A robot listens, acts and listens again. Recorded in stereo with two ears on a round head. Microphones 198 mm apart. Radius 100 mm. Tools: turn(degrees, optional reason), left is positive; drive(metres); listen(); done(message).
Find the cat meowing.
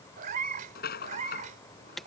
turn(degrees=-35, reason="The cat meowing: about 35° right or 145° right.")
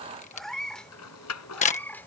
turn(degrees=10, reason="So it is at 10° left.")
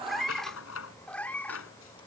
turn(degrees=10, reason="The cat meowing is now 10° left.")
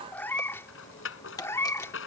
turn(degrees=10, reason="The cat meowing is now 10° left.")
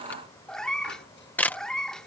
done("Found it: a cat meowing, straight ahead.")